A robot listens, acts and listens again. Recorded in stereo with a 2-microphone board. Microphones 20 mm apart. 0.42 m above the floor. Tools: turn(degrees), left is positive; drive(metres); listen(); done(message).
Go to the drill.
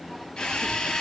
turn(degrees=45)
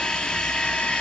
turn(degrees=85)
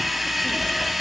drive(metres=1.0)
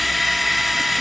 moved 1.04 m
turn(degrees=10)
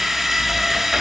drive(metres=1.0)
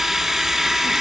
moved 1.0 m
drive(metres=1.0)
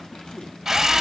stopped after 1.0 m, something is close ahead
turn(degrees=-20)
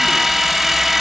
done("I am next to the drill.")